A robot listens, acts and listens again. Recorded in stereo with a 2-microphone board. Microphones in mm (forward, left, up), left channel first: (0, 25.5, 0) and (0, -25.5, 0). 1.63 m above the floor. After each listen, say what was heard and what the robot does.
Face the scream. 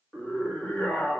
The scream: about 25° left or 155° left. Turn 25° left.
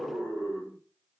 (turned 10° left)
So it is at 15° left. Turn 15° left.
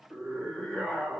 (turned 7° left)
Found it: a scream, straight ahead.